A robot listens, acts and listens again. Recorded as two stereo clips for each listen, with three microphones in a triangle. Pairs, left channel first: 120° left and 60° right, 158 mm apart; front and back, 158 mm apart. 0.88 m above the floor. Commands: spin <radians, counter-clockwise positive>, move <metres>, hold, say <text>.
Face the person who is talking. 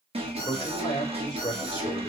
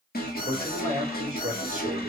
spin 2.97
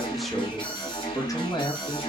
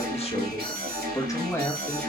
spin 1.31
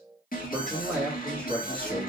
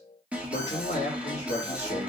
spin 0.70
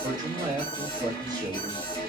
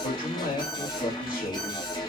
say Facing the man speaking, 1 to 2 m away.